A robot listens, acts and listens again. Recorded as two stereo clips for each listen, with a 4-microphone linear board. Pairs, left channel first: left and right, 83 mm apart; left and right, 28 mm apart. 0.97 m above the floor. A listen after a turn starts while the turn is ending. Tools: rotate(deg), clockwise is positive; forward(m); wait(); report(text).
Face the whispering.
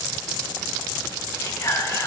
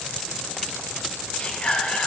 rotate(-40)
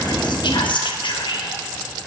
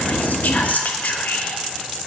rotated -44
rotate(-95)
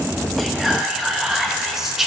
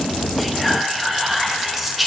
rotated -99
report("Found it: whispering, straight ahead.")